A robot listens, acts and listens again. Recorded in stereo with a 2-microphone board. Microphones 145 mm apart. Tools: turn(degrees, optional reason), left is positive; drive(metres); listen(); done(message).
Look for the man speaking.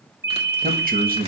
turn(degrees=-90)
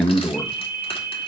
turn(degrees=10, reason="So it is at 10° left.")
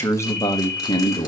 turn(degrees=35, reason="The man speaking is now 35° left.")
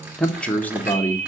turn(degrees=20, reason="The man speaking is now 20° left.")
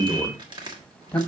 turn(degrees=10, reason="The man speaking is now 10° left.")
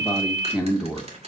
done("Facing the man speaking.")